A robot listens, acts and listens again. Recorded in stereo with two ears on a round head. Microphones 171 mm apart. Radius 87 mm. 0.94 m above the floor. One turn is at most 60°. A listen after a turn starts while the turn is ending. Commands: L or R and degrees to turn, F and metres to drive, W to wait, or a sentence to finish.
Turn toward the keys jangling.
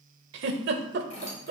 L35
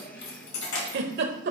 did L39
L60
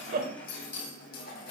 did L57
L50
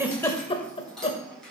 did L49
Found it: keys jangling, straight ahead.